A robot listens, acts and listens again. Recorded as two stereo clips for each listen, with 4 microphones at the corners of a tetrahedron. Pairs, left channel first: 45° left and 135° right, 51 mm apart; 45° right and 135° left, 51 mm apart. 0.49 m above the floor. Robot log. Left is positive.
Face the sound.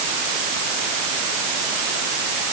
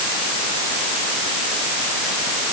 cmd idle
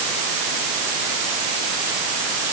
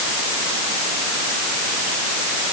cmd idle
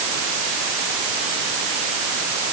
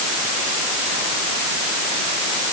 end: I can't make out anything.